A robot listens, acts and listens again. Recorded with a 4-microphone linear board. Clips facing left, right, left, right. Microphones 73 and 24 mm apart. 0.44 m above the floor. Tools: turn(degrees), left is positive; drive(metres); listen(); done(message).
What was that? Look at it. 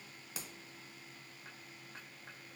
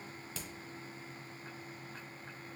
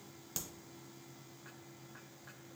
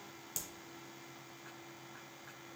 turn(degrees=30)
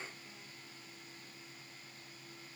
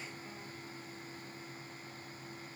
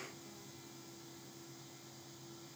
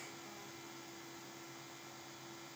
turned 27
listen()
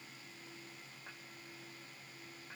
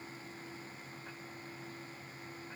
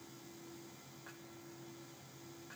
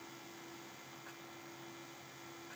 done("I heard a crack, but can't make it out now. It was about 15° right or 140° left.")